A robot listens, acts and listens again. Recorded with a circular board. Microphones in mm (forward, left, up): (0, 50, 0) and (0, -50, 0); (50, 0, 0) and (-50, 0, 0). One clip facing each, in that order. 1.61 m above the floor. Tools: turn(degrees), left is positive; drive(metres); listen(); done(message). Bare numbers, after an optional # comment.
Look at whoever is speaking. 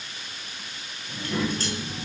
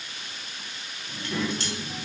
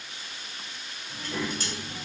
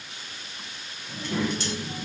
# The child speaking: 170° left.
turn(170)
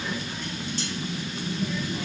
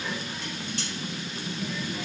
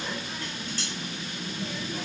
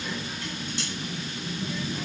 # The child speaking is now 15° left.
turn(15)
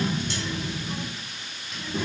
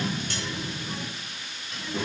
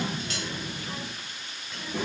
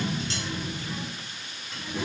done("Facing the child speaking, 1 to 2 m away.")